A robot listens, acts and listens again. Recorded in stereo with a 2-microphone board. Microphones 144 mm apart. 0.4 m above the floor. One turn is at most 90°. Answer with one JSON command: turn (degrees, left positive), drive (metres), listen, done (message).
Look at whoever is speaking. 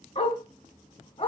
{"listen": true}
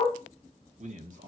{"turn": -65}
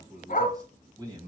{"turn": -30}
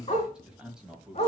{"done": "Facing the man speaking, 2 to 4 m away."}